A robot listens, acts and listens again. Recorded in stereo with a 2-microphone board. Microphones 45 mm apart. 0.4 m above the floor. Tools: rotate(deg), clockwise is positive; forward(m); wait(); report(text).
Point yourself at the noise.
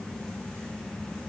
wait()
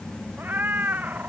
rotate(35)
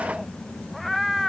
report("Found it: a cat meowing, straight ahead.")